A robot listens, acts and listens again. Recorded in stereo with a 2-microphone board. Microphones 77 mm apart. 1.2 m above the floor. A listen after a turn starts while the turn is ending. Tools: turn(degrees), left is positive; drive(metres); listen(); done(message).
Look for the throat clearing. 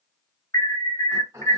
turn(degrees=-40)
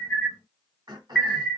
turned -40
turn(degrees=-90)
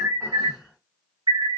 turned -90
listen()
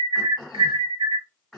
done("Facing the throat clearing.")